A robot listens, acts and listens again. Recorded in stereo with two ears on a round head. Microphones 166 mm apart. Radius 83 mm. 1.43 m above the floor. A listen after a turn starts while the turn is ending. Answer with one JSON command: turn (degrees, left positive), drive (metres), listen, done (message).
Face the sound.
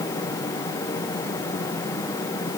{"listen": true}
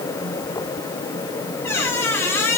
{"turn": 30}
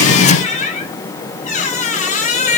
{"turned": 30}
{"turn": 135}
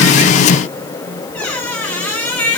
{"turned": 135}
{"turn": 10}
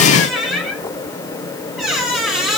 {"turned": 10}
{"done": "Facing the squeak, 1 to 2 m away."}